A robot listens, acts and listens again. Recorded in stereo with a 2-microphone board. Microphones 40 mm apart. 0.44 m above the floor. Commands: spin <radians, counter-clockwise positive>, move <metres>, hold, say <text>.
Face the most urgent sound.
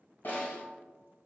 hold
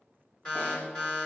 spin 0.44
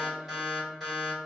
say Found it: an alarm, straight ahead, 1 to 2 m away.